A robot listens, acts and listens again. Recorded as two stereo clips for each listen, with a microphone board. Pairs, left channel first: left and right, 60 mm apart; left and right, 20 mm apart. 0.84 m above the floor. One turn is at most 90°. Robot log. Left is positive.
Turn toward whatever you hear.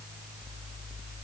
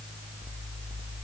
cmd idle
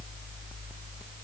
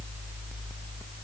cmd idle
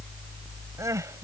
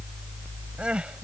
note: The crying: about 60° right or 120° right.
cmd yaw -60
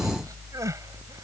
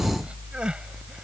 cmd idle
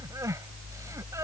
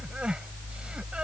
note: So it is at 60° right.
cmd yaw -60
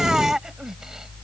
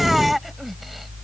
note: The crying is now 10° right.
cmd yaw -10
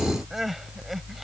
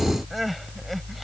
end: Found it: crying, straight ahead.